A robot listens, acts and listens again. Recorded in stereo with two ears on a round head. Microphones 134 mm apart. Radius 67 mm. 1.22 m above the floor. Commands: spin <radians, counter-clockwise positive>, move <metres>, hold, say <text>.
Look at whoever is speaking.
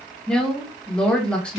spin 0.52
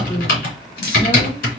hold
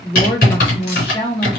spin 2.44
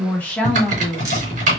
spin 0.17
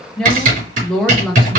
say Facing the woman speaking, 1 to 2 m away.